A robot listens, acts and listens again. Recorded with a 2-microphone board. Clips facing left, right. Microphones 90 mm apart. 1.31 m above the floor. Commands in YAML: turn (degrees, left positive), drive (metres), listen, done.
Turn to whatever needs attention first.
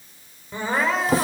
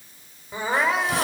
turn: -30
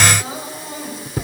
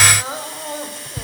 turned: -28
turn: -140
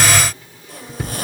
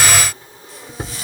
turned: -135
listen: true
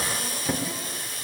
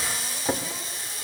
listen: true
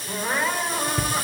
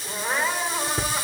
done: "Found it: crying, straight ahead."